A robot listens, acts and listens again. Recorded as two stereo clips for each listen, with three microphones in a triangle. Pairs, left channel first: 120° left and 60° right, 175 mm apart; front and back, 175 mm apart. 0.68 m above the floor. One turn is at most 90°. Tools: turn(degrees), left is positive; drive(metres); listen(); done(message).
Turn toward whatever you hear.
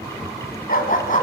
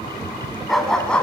turn(degrees=85)
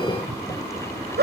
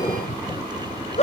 turn(degrees=-50)
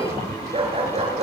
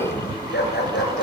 done("Found it: a dog barking, straight ahead, over 4 m away.")